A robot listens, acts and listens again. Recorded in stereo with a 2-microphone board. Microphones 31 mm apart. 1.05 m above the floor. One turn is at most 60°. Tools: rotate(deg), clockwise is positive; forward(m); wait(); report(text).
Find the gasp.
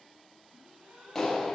rotate(60)
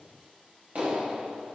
wait()
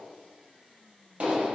report("I heard a gasp, but can't make it out now. It was about 10° right or 50° right.")